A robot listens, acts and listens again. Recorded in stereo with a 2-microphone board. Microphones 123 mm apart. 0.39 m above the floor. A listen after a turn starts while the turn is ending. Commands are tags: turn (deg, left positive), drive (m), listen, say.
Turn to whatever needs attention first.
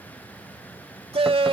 <turn deg="-50"/>
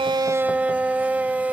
<turn deg="-15"/>
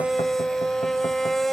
<say>Facing the shout.</say>